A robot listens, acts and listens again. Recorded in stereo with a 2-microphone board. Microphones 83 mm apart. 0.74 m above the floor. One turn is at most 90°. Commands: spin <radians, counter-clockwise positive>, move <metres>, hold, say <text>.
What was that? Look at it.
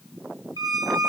spin -0.96
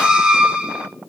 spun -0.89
spin -0.17
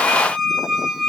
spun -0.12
say Found it: a squeak, straight ahead, under 1 m away.